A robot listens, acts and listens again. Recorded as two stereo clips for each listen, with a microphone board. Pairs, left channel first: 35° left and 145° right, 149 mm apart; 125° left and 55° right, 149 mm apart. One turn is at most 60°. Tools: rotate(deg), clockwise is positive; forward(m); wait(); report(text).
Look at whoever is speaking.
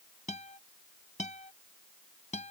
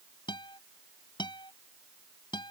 wait()
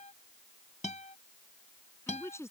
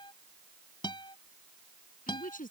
rotate(-60)
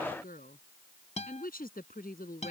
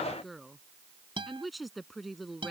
rotate(-35)
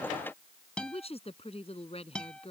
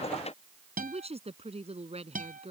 rotate(10)
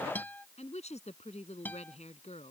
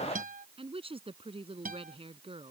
report("Found it: a woman speaking, straight ahead.")